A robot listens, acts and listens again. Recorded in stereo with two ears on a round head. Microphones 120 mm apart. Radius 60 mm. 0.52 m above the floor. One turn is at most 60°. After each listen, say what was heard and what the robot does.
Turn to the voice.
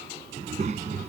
The child speaking: about 55° right or 125° right. Turn 55° right.
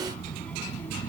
So it is at 15° left. Turn 15° left.
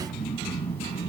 The child speaking is now 20° left. Turn 20° left.
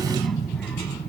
The child speaking is now 10° left. Turn 10° left.
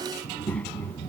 The child speaking is now 15° left. Turn 15° left.
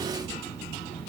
Facing the child speaking.